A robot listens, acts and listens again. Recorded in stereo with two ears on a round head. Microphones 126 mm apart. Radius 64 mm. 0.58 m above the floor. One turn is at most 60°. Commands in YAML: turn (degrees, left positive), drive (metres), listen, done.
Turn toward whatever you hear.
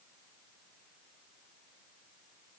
listen: true
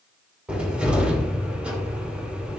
turn: -30
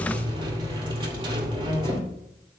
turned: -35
turn: -60
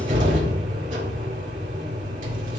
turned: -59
turn: -60
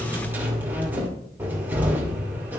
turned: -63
turn: -15
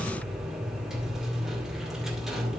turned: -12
done: "Facing the cupboard door."